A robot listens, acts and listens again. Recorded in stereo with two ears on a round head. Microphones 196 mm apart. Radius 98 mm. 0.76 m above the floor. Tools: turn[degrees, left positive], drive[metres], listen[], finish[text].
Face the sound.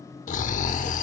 Thought: The snoring: about 35° left or 145° left.
Action: turn[35]
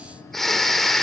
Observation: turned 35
Action: finish[Facing the snoring, 1 to 2 m away.]